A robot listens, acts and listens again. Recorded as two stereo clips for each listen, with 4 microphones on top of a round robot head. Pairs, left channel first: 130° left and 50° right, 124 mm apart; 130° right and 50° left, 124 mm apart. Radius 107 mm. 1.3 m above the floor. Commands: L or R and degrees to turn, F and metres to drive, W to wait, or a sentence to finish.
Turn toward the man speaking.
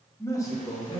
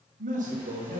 L75
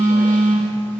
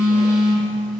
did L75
W
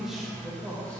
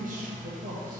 L40
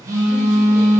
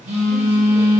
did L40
W
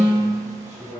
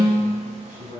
L35
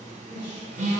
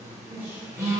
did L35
Found it: a man speaking, straight ahead, 2 to 4 m away.